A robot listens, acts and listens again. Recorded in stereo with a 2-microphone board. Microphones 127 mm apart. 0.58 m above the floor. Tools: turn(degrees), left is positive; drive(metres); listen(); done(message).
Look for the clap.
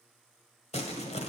listen()
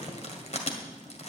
listen()
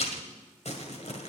done("I can't make out a clap, only crumpling.")